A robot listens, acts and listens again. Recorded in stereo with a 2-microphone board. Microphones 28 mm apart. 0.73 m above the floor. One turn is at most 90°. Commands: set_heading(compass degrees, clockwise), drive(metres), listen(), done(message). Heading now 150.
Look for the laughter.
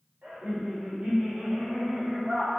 set_heading(205)
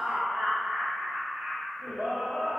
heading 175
set_heading(265)
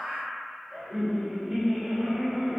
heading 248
set_heading(268)
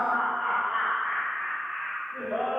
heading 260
set_heading(270)
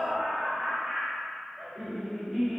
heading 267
done("Found it: laughter, straight ahead, 1 to 2 m away.")